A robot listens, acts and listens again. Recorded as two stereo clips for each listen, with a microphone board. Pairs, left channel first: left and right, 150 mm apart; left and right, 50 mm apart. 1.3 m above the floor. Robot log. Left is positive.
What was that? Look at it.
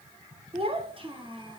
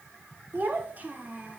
note: The child speaking: about 35° right or 145° right.
cmd yaw -35
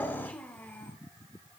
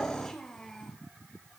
note: So it is at 15° left.
cmd yaw +15
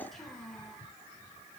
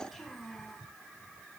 end: Facing the child speaking.